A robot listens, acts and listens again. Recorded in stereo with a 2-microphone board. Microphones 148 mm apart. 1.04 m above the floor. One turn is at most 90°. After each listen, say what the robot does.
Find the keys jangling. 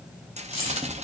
Turn 40° left.
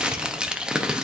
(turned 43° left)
Keep listening.
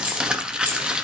Turn 10° right.
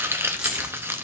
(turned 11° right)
Keep listening.
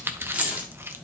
Turn 10° right.
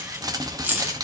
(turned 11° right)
Turn 15° right.
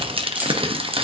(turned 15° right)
Keep listening.
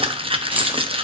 Keep listening.
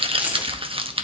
Turn 10° right.
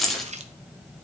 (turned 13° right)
Found it: keys jangling, straight ahead, 1 to 2 m away.